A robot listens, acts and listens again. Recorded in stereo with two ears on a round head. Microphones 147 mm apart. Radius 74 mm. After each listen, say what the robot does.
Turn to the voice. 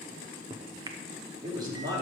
Turn 25° right.
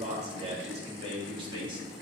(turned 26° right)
Turn 30° right.
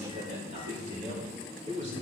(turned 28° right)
Turn 140° right.
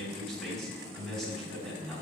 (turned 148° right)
Facing the man speaking, over 4 m away.